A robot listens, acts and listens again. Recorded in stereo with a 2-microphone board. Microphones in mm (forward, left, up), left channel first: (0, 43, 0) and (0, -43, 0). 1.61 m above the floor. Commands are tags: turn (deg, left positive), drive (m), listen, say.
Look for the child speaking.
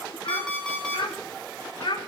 <turn deg="65"/>
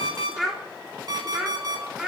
<turn deg="-10"/>
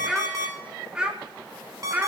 <turn deg="-20"/>
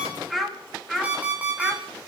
<say>Facing the child speaking.</say>